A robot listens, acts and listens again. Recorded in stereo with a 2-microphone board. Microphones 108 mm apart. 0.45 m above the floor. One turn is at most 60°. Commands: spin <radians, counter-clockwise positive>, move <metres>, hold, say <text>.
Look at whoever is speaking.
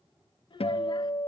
spin 0.87
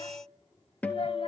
hold
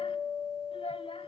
spin 1.05
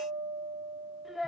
say Found it: a child speaking, straight ahead.